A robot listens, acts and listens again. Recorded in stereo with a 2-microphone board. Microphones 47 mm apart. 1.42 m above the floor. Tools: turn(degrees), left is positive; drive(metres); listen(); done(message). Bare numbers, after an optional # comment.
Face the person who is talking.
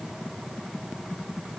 listen()
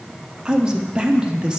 # The man speaking: about 20° right or 160° right.
turn(-20)
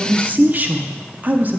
# So it is at 140° right.
turn(-140)
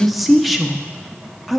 done("Facing the man speaking.")